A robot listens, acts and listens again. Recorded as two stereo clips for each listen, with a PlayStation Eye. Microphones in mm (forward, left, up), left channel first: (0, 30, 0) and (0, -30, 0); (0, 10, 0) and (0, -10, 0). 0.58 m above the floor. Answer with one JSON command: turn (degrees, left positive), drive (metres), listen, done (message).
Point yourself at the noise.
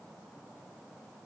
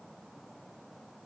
{"listen": true}
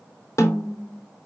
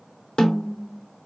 {"turn": 55}
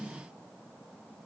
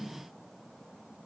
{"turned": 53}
{"listen": true}
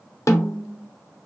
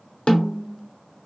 {"turn": 65}
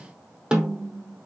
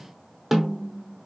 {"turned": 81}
{"turn": -15}
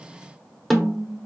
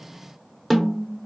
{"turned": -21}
{"done": "Facing the snare drum."}